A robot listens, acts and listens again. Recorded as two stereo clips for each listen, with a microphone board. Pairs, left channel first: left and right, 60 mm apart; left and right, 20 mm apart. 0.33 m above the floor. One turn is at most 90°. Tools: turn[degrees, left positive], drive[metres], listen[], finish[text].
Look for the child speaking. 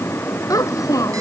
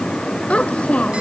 Thought: The child speaking: about 75° left or 105° left.
Action: turn[75]
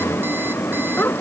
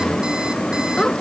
Thought: So it is at 35° left.
Action: turn[35]
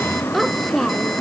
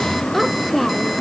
Action: finish[Found it: a child speaking, straight ahead.]